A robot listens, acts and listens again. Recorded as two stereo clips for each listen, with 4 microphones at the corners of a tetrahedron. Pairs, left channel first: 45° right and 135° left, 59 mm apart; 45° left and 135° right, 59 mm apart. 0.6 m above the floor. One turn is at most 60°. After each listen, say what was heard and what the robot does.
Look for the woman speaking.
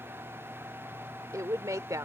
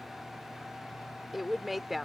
The woman speaking: 140° left. Turn 60° left.
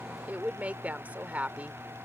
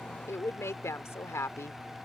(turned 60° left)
The woman speaking is now 75° left. Turn 60° left.
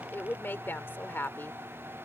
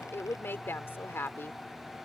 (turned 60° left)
Found it: a woman speaking, straight ahead.